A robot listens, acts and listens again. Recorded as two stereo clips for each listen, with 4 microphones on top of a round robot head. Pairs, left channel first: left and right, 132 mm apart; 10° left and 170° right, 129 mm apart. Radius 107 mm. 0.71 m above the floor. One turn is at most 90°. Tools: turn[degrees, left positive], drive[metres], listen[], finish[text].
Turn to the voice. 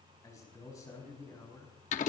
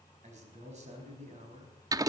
Thought: The man speaking: 160° left.
Action: turn[90]
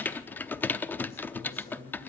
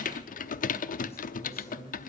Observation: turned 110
Thought: The man speaking is now 50° left.
Action: turn[50]
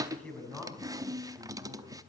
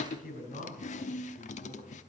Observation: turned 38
Thought: The man speaking is now 10° left.
Action: turn[10]
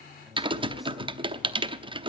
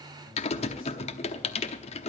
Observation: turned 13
Action: listen[]
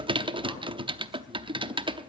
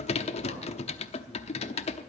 Action: listen[]
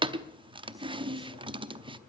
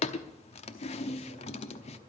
Action: finish[I heard a man speaking from this way, but can't make it out now.]